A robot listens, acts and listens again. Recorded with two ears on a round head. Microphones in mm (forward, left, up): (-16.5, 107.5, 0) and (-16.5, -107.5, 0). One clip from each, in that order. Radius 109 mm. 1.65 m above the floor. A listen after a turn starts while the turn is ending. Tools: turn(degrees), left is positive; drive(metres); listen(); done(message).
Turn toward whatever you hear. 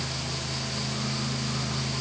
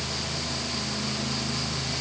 listen()
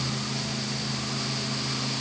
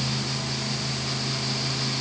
listen()
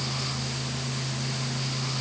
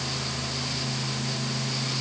done("I can't make out anything to turn to.")